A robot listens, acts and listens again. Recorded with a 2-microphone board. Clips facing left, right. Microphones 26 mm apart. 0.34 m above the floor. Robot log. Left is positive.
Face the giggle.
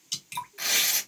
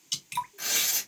cmd idle
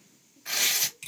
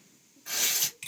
cmd idle
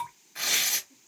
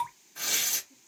end: I can't make out a giggle to turn to.